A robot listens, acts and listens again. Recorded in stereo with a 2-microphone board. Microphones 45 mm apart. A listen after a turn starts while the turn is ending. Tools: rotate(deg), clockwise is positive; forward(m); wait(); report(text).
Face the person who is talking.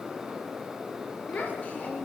rotate(-35)
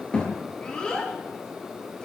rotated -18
rotate(-20)
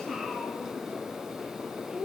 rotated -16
report("Found it: a child speaking, straight ahead.")